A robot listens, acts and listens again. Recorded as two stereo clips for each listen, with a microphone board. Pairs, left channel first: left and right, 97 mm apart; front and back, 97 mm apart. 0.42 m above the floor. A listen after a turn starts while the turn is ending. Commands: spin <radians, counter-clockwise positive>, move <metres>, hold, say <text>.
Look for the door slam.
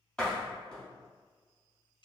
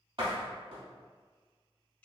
spin 2.97
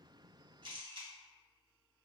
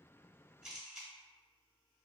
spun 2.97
say Facing where the door slam came from. I can't hear it now.